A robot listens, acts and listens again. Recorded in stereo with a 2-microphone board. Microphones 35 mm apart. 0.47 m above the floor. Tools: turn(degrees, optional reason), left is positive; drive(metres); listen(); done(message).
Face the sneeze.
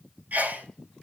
turn(degrees=-50, reason="The sneeze: about 50° right or 130° right.")
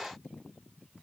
listen()
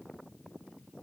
done("I heard a sneeze, but can't make it out now. It was about straight ahead or 80° right.")